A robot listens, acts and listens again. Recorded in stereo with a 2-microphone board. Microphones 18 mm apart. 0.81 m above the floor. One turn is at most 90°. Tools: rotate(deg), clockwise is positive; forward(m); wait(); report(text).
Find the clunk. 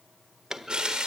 rotate(35)
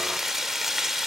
wait()
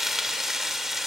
report("I heard a clunk, but can't make it out now. It was about straight ahead or 110° right.")